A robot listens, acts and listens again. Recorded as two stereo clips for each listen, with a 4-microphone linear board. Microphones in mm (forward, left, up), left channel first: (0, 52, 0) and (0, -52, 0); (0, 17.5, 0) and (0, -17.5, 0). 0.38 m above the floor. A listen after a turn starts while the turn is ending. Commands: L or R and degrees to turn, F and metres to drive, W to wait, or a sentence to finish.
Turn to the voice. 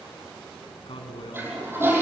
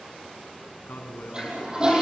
L70
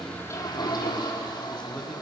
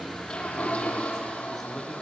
W
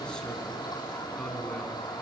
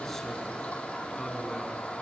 W
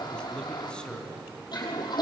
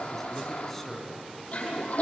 L10
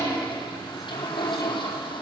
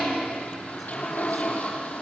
W
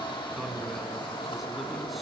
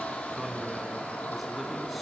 Facing the man speaking.